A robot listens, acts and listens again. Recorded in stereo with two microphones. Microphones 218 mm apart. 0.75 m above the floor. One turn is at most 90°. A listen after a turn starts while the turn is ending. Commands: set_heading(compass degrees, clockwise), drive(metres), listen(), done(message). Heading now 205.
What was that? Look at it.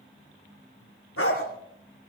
set_heading(115)
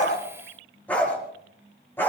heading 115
set_heading(105)
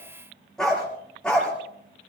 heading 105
done("Found it: a dog barking, straight ahead.")